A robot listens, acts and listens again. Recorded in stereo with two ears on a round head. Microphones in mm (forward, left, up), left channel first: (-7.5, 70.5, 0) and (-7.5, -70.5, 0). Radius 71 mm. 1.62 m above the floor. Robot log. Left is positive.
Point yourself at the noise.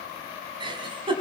note: The giggle: about 35° right or 145° right.
cmd yaw -35
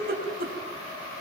note: So it is at 110° right.
cmd yaw -110
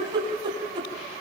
note: The giggle is now 30° right.
cmd yaw -30
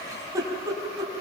note: The giggle is now 20° right.
cmd yaw -20
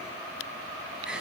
end: Found it: a giggle, straight ahead.